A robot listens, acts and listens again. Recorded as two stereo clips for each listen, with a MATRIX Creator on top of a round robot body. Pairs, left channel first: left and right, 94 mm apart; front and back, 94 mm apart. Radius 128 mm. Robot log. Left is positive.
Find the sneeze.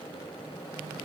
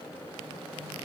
cmd idle
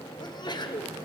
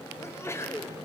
note: The sneeze: 60° left.
cmd yaw +60
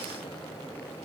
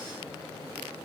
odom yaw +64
end: I heard a sneeze from this way, but can't make it out now.